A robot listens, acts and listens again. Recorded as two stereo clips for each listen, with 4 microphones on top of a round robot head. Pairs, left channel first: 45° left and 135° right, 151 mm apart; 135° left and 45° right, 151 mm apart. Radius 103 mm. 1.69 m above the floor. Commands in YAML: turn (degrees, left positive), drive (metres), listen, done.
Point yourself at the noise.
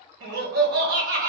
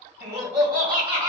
turn: -105
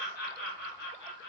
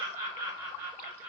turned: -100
turn: 35
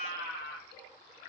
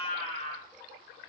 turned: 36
turn: 10
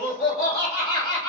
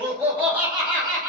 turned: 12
turn: 20
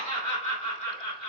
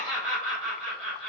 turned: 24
done: "Facing the laughter."